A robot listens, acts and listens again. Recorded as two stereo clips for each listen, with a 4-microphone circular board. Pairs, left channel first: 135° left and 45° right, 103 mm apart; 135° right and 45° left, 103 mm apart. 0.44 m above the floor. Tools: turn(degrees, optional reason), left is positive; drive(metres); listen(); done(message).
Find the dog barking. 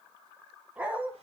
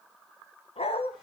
turn(degrees=-120, reason="The dog barking: 120° right.")
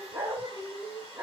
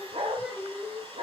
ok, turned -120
turn(degrees=30, reason="The dog barking is now 30° left.")
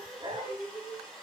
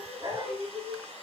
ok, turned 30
done("Facing the dog barking, 2 to 4 m away.")